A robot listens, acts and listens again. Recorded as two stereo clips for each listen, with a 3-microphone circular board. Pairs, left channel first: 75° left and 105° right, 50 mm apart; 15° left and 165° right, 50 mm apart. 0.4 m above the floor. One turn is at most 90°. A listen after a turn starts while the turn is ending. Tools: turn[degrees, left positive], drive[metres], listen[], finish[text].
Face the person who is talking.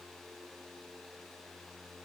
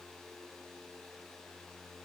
Action: listen[]
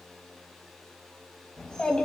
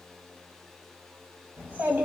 Thought: The child speaking: 145° left.
Action: turn[90]
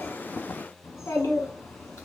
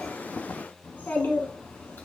Thought: The child speaking is now 60° left.
Action: turn[60]
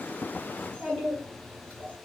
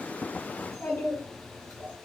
Action: finish[Found it: a child speaking, straight ahead, 2 to 4 m away.]